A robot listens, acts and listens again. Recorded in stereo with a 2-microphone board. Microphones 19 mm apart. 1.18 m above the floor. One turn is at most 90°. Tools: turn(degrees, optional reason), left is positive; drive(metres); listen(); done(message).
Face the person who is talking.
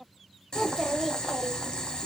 turn(degrees=-30)
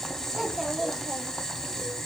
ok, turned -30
turn(degrees=-90, reason="So it is at 145° right.")
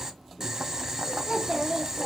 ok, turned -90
turn(degrees=-80, reason="The child speaking is now 80° right.")
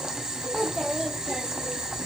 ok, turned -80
done("Found it: a child speaking, straight ahead.")